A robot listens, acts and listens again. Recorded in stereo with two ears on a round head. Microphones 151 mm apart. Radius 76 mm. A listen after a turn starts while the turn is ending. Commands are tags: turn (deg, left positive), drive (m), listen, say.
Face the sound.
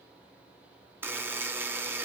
<turn deg="-30"/>
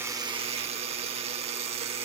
<turn deg="-140"/>
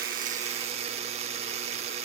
<turn deg="-45"/>
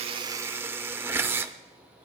<turn deg="-15"/>
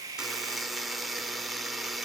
<say>Found it: a buzzer, straight ahead.</say>